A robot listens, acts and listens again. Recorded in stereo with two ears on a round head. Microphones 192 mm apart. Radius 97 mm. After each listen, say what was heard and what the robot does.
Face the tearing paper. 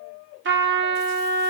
Keep listening.
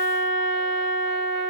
Keep listening.
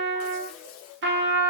I can't make out tearing paper to turn to.